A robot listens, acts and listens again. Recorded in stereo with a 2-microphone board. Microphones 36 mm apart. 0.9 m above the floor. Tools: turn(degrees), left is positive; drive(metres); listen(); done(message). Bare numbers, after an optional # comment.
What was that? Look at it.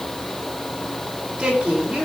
# The woman speaking: about 20° right or 160° right.
turn(-20)
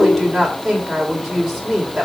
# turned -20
done("Facing the woman speaking, 2 to 4 m away.")